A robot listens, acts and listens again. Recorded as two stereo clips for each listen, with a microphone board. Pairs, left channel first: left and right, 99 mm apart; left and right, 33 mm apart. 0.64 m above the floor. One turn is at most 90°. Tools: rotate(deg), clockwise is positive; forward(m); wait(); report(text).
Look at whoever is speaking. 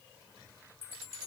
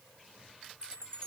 wait()
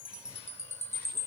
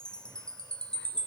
wait()
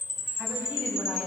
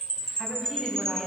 rotate(15)
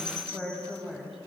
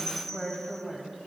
rotate(-30)
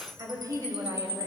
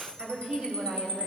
rotate(30)
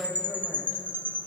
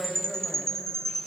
report("Found it: a woman speaking, straight ahead, 2 to 4 m away.")